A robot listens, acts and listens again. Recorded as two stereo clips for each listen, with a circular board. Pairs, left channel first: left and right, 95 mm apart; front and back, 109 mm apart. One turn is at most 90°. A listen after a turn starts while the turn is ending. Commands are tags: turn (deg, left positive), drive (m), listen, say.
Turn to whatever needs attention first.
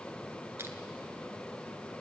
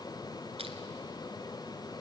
<listen/>
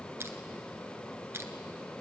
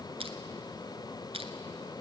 <listen/>
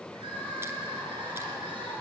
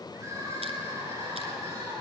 <turn deg="-90"/>
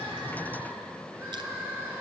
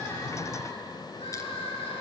<turn deg="-25"/>
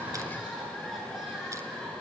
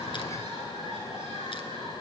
<say>Found it: crying, straight ahead.</say>